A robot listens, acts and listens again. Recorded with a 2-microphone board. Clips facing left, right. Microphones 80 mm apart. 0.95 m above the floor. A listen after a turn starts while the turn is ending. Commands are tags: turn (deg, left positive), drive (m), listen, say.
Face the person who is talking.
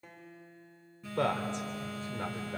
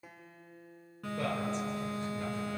<turn deg="75"/>
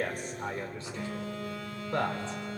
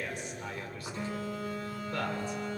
<turn deg="30"/>
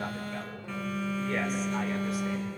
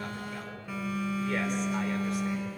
<listen/>
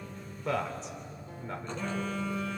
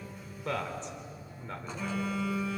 <say>Facing the man speaking, 2 to 4 m away.</say>